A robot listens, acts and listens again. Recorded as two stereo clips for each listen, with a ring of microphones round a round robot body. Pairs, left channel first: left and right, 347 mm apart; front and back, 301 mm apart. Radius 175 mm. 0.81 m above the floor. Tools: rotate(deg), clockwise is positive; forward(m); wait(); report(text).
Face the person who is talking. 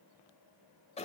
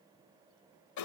wait()
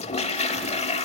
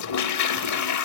wait()
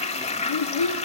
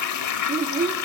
rotate(-115)
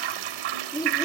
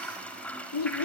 rotate(-10)
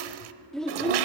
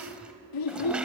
report("Facing the child speaking, under 1 m away.")